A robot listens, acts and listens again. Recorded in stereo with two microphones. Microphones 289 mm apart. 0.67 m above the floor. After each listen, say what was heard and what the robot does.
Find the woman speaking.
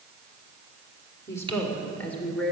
Turn 30° left.
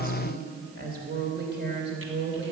So it is at 40° right. Turn 40° right.
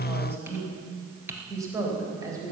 The woman speaking is now 10° right. Turn 10° right.
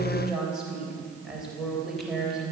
Found it: a woman speaking, straight ahead.